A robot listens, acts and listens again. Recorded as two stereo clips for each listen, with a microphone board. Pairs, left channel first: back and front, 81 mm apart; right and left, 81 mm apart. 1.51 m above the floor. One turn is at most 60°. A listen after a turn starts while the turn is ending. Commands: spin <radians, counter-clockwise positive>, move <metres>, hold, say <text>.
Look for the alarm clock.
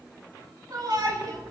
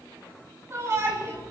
spin -1.05
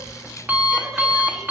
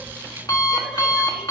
spin -1.05
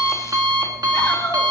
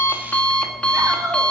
spin -0.26
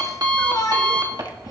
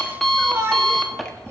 say Facing the alarm clock, 1 to 2 m away.